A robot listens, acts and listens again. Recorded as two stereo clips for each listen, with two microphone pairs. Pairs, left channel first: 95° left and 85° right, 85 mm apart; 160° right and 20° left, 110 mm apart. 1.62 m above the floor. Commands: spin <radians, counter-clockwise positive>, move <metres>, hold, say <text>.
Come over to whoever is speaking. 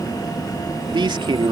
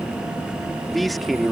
spin -1.22
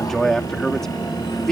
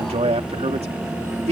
move 1.0
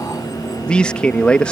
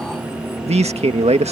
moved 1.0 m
spin 0.26
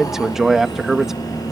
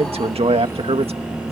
move 1.0
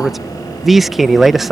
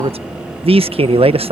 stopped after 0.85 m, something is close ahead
say I am next to the man speaking.